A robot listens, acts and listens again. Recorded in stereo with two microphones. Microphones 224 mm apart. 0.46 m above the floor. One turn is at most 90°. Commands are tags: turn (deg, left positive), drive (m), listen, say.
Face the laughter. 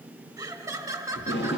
<turn deg="-30"/>
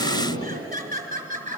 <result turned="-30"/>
<turn deg="-90"/>
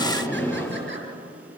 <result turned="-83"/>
<turn deg="-65"/>
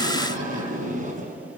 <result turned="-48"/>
<turn deg="-15"/>
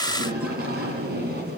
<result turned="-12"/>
<say>I heard laughter from this way, but can't make it out now.</say>